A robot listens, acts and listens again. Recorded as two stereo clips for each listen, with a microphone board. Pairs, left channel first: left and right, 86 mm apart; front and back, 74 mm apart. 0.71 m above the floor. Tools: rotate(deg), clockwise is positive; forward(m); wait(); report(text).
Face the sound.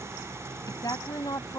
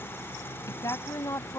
rotate(-45)
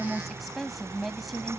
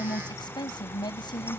report("Facing the woman speaking.")